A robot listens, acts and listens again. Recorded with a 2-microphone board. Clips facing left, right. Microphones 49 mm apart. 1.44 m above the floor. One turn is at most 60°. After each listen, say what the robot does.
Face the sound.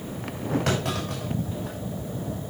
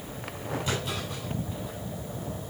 Turn 60° left.
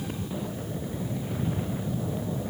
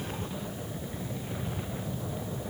Keep listening.
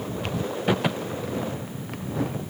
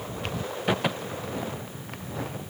I heard a clunk, but can't make it out now. It was about 5° left or 55° left.